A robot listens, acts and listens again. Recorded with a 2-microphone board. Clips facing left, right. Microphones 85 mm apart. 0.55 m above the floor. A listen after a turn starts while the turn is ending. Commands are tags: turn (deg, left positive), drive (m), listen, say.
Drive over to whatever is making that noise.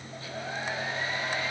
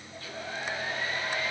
<turn deg="25"/>
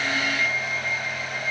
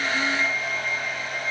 <drive m="1.0"/>
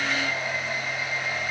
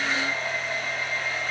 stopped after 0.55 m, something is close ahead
<say>Blocked. The hair dryer is further on, straight ahead.</say>